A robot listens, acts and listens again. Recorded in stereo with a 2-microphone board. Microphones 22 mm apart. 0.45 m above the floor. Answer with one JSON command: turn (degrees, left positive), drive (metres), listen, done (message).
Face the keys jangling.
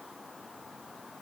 {"listen": true}
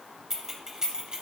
{"turn": -35}
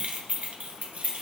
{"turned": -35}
{"turn": -105}
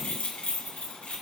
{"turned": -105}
{"turn": 80}
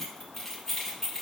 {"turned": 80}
{"turn": 10}
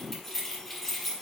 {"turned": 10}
{"done": "Found it: keys jangling, straight ahead."}